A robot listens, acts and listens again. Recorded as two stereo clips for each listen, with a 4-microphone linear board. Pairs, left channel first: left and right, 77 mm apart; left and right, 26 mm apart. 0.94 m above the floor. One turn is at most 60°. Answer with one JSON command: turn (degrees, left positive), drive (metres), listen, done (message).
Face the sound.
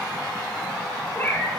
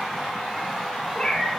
{"turn": 25}
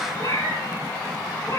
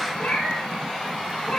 {"turn": 60}
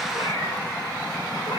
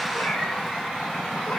{"turn": 60}
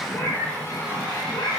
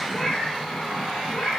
{"turn": 30}
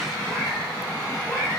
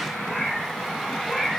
{"done": "Found it: a cat meowing, straight ahead, over 4 m away."}